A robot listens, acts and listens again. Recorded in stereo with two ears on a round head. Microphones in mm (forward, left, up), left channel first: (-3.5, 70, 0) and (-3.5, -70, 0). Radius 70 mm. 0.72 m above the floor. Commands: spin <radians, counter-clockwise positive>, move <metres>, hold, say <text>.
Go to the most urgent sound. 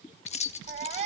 spin -0.79
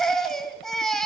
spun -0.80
move 1.0
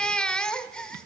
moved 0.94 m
move 1.0
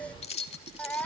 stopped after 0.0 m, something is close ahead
spin 0.17
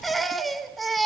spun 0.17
say I am next to the baby crying.